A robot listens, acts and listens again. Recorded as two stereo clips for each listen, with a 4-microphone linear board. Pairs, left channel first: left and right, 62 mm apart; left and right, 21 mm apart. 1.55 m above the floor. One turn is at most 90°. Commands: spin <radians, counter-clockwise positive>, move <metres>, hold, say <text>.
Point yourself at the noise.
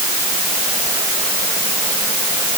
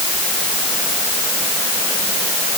hold
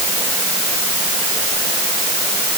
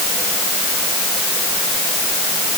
hold
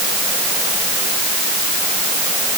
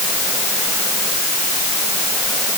say I can't make out anything.